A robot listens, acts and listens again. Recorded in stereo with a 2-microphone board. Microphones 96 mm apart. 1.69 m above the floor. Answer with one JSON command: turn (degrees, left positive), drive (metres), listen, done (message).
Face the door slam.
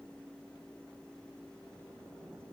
{"listen": true}
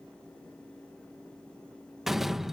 {"turn": -30}
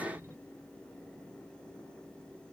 {"listen": true}
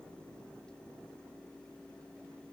{"done": "I heard a door slam, but can't make it out now. It was about 25° left or 145° right."}